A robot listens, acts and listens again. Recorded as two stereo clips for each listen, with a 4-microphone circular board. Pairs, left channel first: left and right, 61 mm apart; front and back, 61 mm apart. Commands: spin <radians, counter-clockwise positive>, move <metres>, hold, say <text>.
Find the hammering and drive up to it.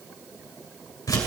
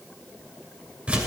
hold
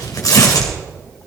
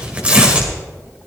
hold
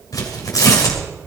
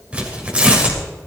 say I can't make out hammering, only tearing paper.